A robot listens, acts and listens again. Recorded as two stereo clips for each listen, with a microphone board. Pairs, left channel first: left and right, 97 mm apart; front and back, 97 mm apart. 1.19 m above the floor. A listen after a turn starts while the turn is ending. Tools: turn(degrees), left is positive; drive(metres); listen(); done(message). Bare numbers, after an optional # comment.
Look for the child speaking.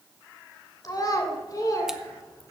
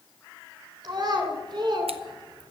# The child speaking: 140° left.
turn(140)
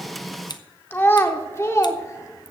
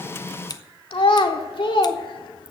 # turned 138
# The child speaking is now 30° left.
turn(30)
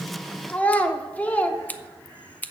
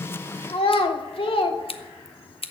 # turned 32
# The child speaking is now 15° left.
turn(15)
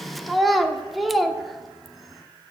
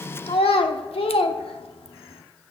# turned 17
done("Found it: a child speaking, straight ahead.")